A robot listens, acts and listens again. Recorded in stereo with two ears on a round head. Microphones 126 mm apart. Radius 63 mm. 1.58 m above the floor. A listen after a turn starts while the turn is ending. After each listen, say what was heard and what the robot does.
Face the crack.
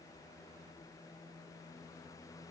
Keep listening.
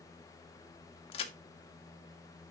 The crack: about 40° left or 140° left. Turn 40° left.
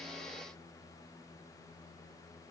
Keep listening.
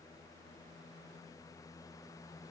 I heard a crack, but can't make it out now. It was about straight ahead or 100° left.